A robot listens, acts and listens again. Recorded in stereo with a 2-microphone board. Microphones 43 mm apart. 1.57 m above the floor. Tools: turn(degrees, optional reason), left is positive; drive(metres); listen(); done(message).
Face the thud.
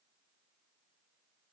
listen()
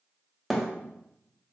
turn(degrees=30)
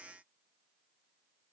listen()
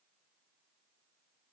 done("I heard a thud, but can't make it out now. It was about 30° right or 150° left.")